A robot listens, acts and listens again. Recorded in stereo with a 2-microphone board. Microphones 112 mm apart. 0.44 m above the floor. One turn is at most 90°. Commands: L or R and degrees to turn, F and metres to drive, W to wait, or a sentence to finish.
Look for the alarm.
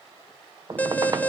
L15
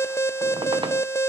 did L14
L90
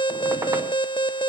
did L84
L65
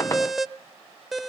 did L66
Facing the alarm.